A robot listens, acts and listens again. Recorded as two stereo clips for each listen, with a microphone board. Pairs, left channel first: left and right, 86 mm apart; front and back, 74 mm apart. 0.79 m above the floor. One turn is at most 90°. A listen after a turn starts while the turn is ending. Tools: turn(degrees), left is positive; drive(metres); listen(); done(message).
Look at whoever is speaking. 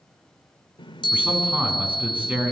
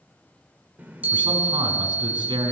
turn(degrees=-90)
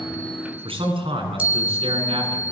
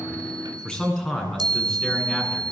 turn(degrees=-80)
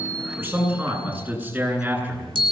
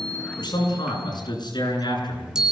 turn(degrees=-20)
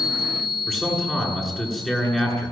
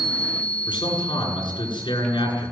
done("Facing the man speaking, over 4 m away.")